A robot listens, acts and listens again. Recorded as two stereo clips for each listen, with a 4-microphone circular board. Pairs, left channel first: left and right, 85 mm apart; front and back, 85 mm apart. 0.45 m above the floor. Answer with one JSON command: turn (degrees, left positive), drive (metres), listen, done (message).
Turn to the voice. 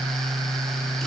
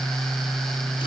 {"listen": true}
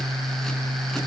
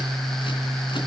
{"listen": true}
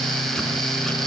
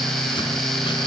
{"done": "I can't make out anyone speaking."}